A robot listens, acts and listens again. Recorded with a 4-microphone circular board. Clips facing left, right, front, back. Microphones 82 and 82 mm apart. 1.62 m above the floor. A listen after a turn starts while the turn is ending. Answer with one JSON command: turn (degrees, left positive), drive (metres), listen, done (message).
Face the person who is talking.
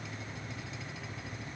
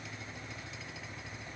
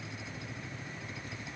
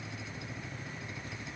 {"listen": true}
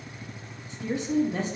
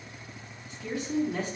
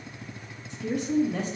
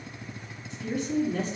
{"turn": 25}
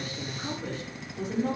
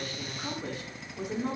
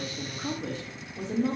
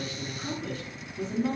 {"turn": -10}
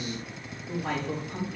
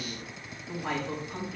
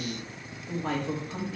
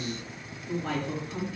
{"done": "Found it: a woman speaking, straight ahead, 2 to 4 m away."}